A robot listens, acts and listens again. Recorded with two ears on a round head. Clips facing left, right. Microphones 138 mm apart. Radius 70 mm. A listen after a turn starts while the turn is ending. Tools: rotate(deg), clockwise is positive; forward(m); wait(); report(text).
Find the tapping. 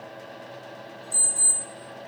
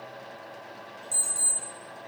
wait()
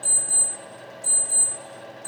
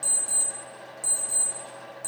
wait()
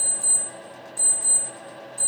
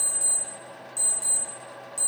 report("I can't make out tapping, only an alarm clock.")